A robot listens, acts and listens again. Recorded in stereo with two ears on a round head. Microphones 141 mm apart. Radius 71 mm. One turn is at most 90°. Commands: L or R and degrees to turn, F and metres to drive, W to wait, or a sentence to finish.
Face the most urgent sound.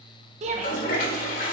R45
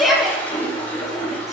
Facing the shout.